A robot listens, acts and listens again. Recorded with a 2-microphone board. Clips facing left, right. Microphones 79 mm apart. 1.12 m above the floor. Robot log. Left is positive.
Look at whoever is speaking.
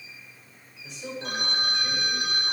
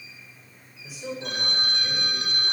cmd yaw -30
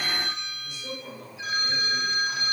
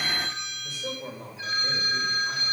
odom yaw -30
note: So it is at 145° right.
cmd yaw -145
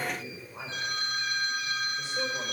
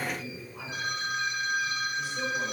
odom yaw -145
note: The man speaking is now 30° left.
cmd yaw +30
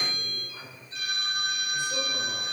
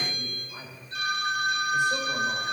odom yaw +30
note: The man speaking is now 20° right.
cmd yaw -20
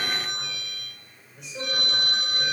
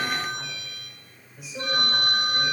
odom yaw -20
end: Found it: a man speaking, straight ahead.